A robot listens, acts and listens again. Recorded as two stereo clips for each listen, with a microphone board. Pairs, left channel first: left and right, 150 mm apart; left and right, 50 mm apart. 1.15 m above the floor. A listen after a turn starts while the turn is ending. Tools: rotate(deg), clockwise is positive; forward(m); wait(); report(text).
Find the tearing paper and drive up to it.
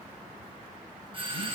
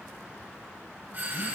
wait()
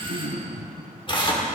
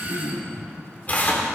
rotate(-35)
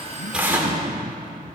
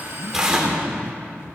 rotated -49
rotate(15)
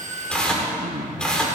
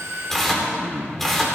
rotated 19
forward(1.0)
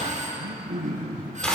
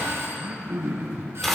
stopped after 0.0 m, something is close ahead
report("Something is in my way. I am facing the tearing paper but have not reached it.")